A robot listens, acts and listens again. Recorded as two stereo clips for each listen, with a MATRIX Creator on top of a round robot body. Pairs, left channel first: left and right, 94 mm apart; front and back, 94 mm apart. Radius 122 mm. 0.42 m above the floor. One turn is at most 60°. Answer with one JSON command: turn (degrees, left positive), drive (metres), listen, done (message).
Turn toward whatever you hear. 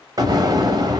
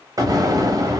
{"turn": -60}
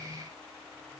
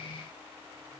{"turn": -60}
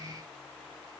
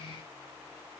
{"turn": -15}
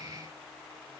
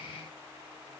{"done": "Facing where the explosion came from. I can't hear it now."}